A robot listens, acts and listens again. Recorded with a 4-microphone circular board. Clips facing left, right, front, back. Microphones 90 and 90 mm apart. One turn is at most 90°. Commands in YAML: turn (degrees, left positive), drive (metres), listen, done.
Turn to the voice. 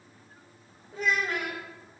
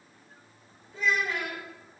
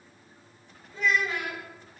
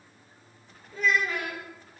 turn: 90
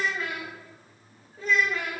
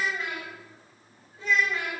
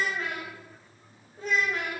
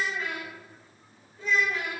turn: 40
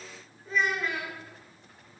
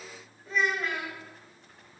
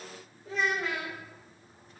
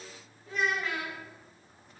done: "Facing the child speaking, 2 to 4 m away."